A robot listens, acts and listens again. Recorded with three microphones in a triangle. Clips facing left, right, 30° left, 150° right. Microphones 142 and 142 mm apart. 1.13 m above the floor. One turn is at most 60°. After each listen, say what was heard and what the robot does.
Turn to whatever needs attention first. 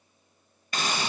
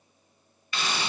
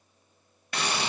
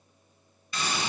Keep listening.
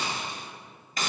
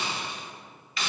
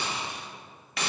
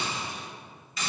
Keep listening.
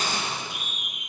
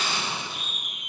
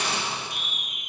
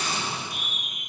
The scream: 165° left. Turn 60° left.
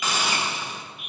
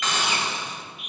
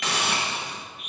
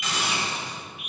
The scream is now 130° left. Turn 60° left.
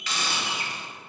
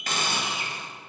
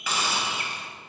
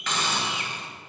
The scream is now 65° left. Turn 60° left.
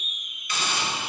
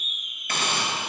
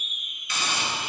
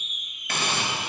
Facing the scream, 2 to 4 m away.